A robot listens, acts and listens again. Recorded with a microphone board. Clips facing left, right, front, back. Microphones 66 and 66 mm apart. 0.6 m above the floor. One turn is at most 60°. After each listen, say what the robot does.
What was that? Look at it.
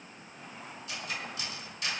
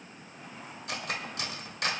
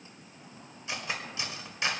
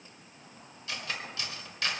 Turn 60° right.
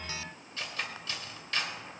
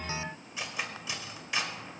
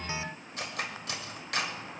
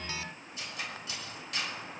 Turn 15° right.
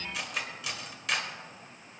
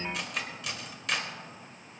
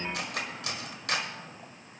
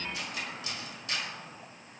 Facing the cutlery clinking, 1 to 2 m away.